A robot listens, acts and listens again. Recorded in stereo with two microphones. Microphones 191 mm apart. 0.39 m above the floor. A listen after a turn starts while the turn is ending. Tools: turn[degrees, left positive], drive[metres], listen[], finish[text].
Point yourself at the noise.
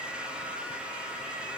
Action: listen[]
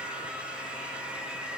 Action: listen[]
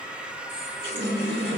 Thought: The running tap: about 65° right or 115° right.
Action: turn[-65]
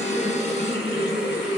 Thought: So it is at 45° right.
Action: turn[-45]
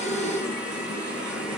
Action: finish[Facing the running tap.]